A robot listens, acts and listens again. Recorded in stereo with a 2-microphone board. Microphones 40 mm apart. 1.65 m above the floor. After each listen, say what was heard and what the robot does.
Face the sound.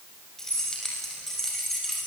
Turn 30° left.
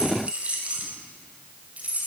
So it is at 35° right. Turn 35° right.
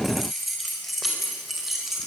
Facing the keys jangling, over 4 m away.